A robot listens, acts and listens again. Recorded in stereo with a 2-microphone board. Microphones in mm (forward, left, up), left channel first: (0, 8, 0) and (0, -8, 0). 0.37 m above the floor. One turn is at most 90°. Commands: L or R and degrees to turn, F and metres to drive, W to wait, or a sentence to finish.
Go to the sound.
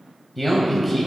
L30
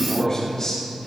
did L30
L90
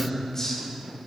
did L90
L35
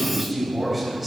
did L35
F1.0
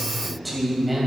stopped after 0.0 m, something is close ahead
R10
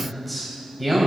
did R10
Something is in my way. I am facing the man speaking but have not reached it.